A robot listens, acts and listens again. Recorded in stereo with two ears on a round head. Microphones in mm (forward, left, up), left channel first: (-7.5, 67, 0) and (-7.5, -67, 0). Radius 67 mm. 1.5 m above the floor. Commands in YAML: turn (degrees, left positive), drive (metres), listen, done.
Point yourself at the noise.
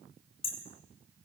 turn: 45
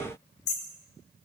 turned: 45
turn: 95
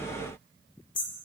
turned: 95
turn: 35
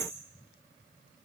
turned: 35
done: "Found it: hammering, straight ahead."